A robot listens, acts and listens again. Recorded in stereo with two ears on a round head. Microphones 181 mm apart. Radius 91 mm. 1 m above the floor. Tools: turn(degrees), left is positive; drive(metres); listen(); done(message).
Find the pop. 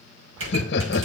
turn(degrees=-70)
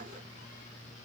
listen()
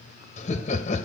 done("I heard a pop, but can't make it out now. It was about straight ahead or 40° right.")